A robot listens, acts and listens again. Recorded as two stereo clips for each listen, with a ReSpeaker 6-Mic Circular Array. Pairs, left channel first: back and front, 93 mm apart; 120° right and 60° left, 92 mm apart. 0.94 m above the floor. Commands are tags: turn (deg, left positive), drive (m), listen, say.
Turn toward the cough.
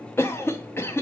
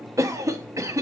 <turn deg="115"/>
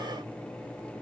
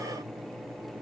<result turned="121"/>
<listen/>
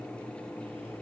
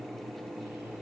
<listen/>
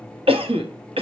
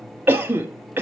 <say>Found it: a cough, straight ahead.</say>